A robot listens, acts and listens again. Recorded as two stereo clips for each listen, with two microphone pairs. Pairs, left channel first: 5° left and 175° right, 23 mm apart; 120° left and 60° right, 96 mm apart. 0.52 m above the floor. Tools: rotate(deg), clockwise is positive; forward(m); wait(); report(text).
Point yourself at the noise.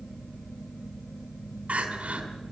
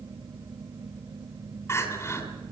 rotate(-180)
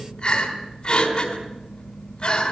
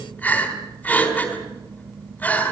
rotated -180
rotate(-50)
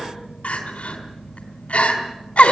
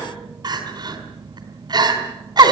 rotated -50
rotate(20)
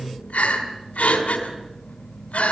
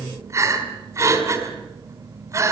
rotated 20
report("Facing the crying, 2 to 4 m away.")